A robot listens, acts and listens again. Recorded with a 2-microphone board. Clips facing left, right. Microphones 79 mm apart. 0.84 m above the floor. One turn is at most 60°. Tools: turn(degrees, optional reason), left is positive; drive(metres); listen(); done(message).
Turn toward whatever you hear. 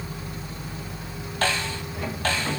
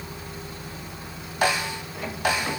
turn(degrees=-30)
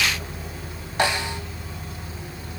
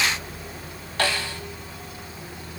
turn(degrees=20, reason="So it is at 20° left.")
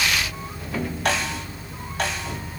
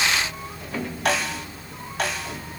done("Found it: a snare drum, straight ahead, 1 to 2 m away.")